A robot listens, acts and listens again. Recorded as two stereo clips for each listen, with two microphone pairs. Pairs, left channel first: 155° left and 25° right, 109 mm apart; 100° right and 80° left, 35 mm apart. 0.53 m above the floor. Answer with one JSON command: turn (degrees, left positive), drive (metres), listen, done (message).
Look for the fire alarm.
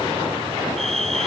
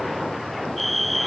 {"turn": -10}
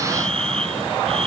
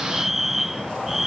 {"done": "Found it: a fire alarm, straight ahead."}